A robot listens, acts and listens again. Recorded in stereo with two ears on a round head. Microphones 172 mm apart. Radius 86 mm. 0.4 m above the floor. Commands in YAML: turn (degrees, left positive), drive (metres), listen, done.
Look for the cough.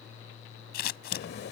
turn: 55
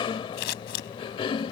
turn: 35
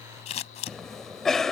done: "Facing the cough."